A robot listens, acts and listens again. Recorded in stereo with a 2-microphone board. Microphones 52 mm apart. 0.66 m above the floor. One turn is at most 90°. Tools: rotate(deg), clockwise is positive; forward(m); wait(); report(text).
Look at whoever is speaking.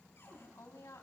rotate(-90)
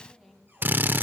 wait()
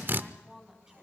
rotate(10)
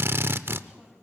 wait()
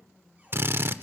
wait()
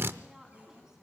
report("Facing where the woman speaking came from. I can't hear it now.")